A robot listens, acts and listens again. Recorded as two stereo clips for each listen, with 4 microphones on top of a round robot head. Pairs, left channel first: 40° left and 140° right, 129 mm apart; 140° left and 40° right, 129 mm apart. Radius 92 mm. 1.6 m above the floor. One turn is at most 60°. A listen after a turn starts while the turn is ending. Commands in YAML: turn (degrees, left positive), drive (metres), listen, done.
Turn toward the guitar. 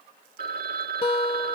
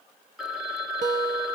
turn: -10
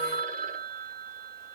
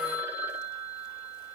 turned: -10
listen: true
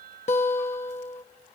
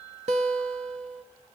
done: "Facing the guitar, under 1 m away."